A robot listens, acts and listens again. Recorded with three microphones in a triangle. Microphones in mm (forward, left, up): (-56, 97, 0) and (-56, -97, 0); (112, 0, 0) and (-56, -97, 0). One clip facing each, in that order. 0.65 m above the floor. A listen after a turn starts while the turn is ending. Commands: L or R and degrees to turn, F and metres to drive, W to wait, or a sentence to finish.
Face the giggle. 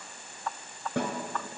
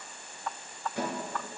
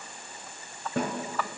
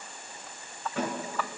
W
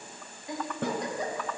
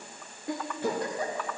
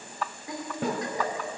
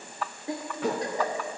R95
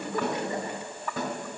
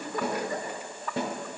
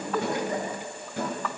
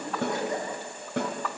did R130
L35
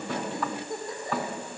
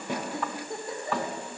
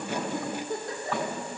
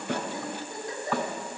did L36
Found it: a giggle, straight ahead.